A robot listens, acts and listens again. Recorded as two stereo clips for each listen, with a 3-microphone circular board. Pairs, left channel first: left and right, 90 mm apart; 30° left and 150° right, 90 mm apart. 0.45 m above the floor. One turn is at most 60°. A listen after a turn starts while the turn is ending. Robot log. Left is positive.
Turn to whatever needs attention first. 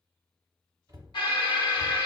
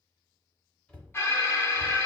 note: The alarm: 90° left.
cmd yaw +60
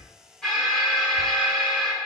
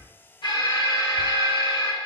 end: Found it: an alarm, straight ahead.